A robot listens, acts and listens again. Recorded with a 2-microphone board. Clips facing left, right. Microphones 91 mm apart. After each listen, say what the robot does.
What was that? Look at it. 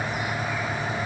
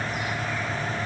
Keep listening.
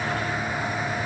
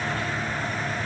Keep listening.
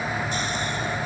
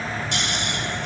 Turn 90° right.
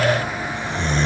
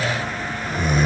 Found it: snoring, straight ahead.